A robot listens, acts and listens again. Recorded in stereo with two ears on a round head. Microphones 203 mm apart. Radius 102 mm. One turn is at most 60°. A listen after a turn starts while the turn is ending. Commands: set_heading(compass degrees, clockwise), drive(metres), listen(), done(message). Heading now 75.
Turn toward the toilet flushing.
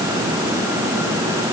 listen()
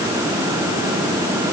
listen()
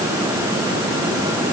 done("I can't make out a toilet flushing.")